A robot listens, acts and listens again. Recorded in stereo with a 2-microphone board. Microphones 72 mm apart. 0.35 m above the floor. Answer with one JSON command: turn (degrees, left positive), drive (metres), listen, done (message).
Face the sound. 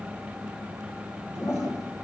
{"turn": 45}
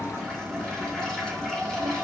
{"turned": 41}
{"turn": 10}
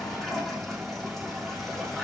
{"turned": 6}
{"done": "Facing the toilet flushing."}